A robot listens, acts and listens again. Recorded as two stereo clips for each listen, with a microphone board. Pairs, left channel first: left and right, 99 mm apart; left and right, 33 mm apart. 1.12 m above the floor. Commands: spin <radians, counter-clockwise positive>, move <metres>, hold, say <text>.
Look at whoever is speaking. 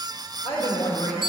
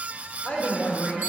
spin 1.57
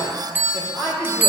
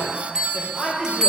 spin -0.17
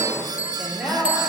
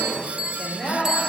spin -0.17
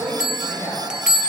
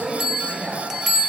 say Found it: a woman speaking, straight ahead, 2 to 4 m away.